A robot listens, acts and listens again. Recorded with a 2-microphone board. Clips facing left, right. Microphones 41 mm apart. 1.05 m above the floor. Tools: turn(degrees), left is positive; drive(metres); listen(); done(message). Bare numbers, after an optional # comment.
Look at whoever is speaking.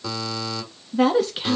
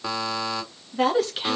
turn(30)
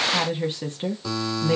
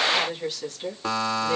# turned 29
# So it is at 145° left.
turn(145)
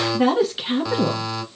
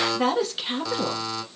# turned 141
done("Found it: a woman speaking, straight ahead.")